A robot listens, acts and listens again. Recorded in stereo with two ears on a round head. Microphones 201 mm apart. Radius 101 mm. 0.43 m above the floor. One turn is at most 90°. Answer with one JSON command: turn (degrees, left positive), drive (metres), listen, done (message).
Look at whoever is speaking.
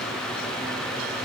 {"listen": true}
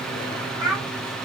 {"turn": -15}
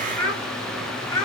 {"turn": 15}
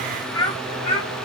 {"turn": 25}
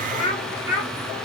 {"turn": 35}
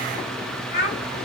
{"turn": 40}
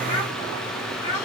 {"turn": 20}
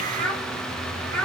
{"done": "Facing the child speaking, 1 to 2 m away."}